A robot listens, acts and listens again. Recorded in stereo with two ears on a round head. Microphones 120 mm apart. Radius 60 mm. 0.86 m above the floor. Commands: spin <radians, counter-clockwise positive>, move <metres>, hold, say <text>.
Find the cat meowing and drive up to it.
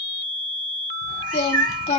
spin -1.22
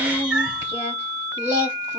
move 1.0
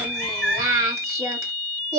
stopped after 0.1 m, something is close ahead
say Something is in my way. I am facing the cat meowing but have not reached it.